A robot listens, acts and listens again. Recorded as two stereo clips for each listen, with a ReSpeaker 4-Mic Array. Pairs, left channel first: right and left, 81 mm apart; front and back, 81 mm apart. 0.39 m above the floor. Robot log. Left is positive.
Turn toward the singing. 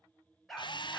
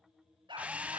cmd idle
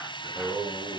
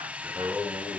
note: The singing: 110° left.
cmd yaw +110
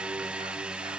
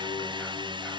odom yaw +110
cmd idle
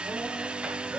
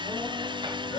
note: The singing is now 15° left.
cmd yaw +15
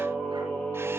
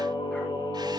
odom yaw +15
note: The singing is now 10° right.
cmd yaw -10
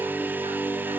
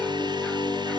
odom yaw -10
end: Facing the singing, over 4 m away.